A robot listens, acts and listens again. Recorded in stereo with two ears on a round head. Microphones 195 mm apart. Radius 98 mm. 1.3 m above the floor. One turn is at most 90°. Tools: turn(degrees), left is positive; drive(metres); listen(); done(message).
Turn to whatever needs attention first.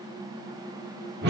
listen()
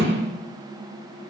listen()
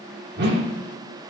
done("I can't make out anything urgent, only a whoosh.")